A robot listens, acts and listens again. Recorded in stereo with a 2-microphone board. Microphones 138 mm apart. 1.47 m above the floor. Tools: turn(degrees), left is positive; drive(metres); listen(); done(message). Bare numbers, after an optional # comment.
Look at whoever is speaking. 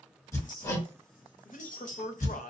# The man speaking: about 70° left or 110° left.
turn(70)
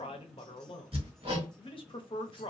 # So it is at 40° left.
turn(40)
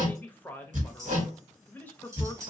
# The man speaking is now 15° left.
turn(15)
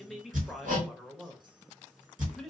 done("Facing the man speaking, under 1 m away.")